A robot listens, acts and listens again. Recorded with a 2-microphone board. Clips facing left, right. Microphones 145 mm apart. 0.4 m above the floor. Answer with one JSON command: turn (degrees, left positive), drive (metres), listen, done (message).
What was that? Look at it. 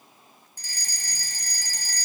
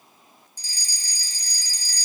{"turn": 55}
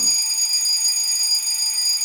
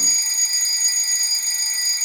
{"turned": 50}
{"turn": 10}
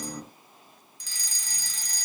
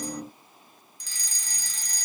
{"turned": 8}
{"done": "Found it: a fire alarm, straight ahead."}